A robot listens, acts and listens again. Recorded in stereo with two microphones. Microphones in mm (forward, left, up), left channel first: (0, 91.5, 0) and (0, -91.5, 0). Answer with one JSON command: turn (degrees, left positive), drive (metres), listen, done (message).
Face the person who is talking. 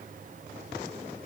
{"listen": true}
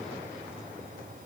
{"listen": true}
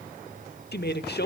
{"turn": 65}
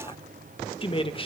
{"turn": 35}
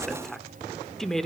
{"done": "Found it: a woman speaking, straight ahead, 1 to 2 m away."}